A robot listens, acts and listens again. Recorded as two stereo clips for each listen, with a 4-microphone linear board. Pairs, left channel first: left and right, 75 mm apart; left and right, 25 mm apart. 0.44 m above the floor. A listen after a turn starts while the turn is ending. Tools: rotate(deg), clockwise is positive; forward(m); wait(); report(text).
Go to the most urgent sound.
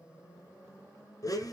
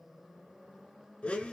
wait()
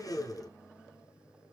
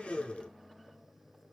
wait()
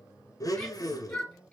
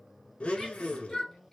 rotate(-15)
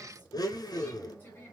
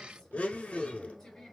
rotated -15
rotate(-155)
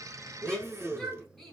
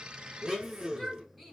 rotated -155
forward(1.0)
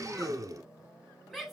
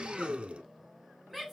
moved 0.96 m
forward(1.0)
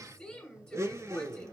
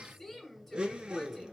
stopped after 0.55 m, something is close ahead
rotate(-20)
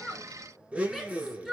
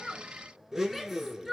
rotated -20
report("Arrived at the shout, straight ahead.")